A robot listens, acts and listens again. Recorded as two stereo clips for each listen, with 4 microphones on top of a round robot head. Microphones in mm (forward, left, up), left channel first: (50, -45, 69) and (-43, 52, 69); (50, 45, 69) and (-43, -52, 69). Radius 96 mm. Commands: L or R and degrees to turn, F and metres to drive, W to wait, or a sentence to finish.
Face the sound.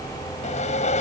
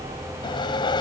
R10
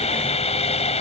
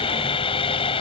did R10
Found it: sawing, straight ahead.